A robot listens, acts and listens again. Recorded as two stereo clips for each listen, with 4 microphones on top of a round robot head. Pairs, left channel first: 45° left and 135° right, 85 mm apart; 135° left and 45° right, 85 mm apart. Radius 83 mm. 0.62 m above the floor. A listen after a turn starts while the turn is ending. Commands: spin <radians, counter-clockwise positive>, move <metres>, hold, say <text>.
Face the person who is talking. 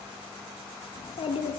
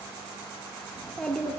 spin 0.87
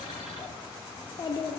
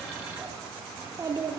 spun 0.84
say Found it: a child speaking, straight ahead.